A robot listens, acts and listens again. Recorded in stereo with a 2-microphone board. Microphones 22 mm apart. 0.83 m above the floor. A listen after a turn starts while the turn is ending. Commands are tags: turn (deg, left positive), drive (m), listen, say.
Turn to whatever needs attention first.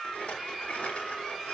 <listen/>
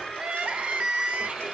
<turn deg="-65"/>
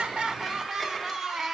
<turn deg="-25"/>
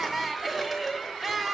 <turn deg="-10"/>
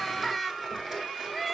<say>Facing the crying, under 1 m away.</say>